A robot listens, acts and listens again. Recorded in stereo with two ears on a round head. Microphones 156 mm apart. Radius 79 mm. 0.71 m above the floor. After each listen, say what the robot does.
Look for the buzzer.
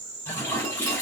Keep listening.
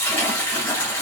Keep listening.
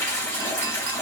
I can't make out a buzzer, only a toilet flushing.